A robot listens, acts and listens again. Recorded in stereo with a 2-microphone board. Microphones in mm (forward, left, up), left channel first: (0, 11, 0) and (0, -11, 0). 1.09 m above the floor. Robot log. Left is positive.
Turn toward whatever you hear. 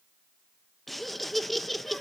cmd yaw +30
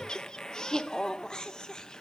note: So it is at 150° left.
cmd yaw +150
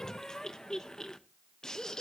note: The laughter is now 30° left.
cmd yaw +30
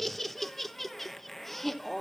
note: The laughter is now 10° left.
cmd yaw +10
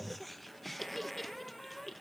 end: Facing the laughter.